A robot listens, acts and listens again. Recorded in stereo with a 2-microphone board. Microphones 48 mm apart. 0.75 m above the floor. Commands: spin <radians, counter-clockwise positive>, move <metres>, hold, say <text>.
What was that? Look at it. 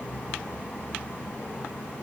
hold
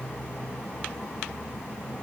hold
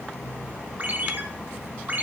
spin -0.70
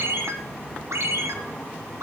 spin -1.75
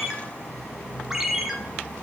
spin -0.17
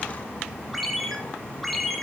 say Found it: a ringtone, straight ahead.